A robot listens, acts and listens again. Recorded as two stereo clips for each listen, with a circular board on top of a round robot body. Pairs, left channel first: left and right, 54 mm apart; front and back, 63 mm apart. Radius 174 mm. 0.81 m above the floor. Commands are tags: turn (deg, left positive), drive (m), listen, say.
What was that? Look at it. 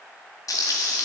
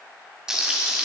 <turn deg="100"/>
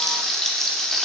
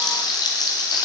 <say>Found it: frying, straight ahead.</say>